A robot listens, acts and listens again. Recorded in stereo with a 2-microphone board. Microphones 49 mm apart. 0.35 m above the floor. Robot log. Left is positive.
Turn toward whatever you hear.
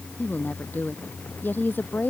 note: The woman speaking: about 40° left or 140° left.
cmd yaw +40
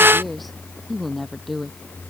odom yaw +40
end: Found it: a woman speaking, straight ahead.